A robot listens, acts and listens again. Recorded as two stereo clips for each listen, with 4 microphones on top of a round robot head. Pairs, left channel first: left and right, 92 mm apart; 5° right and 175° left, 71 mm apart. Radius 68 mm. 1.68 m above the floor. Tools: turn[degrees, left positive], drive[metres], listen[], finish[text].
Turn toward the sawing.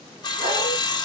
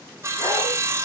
Thought: The sawing: 130° left.
Action: turn[130]
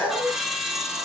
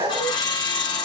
Action: finish[Facing the sawing.]